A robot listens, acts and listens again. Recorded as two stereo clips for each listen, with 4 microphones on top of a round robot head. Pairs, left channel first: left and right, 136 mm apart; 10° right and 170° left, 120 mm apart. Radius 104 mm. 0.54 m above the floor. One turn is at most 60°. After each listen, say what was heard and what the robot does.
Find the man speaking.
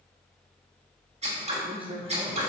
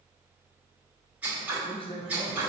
The man speaking: 50° right. Turn 50° right.
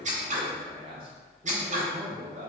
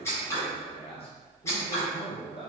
The man speaking is now 55° right. Turn 55° right.
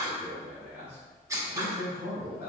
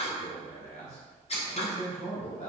The man speaking is now 20° right. Turn 20° right.
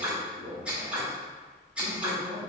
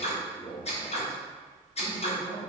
Found it: a man speaking, straight ahead, 2 to 4 m away.